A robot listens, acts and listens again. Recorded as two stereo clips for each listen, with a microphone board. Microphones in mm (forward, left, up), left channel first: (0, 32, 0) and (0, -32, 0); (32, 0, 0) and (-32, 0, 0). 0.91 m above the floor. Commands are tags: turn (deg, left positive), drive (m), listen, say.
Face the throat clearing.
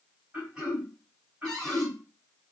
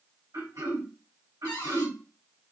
<turn deg="-165"/>
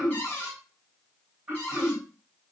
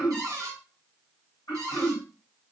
<turn deg="-25"/>
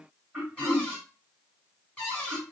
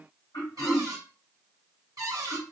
<turn deg="-15"/>
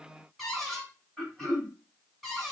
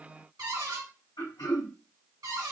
<say>Found it: throat clearing, straight ahead.</say>